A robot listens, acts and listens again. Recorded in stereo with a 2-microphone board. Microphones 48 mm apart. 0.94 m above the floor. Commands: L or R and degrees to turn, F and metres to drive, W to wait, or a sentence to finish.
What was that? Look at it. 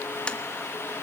L20
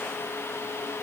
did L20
W
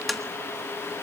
Found it: tapping, straight ahead, 1 to 2 m away.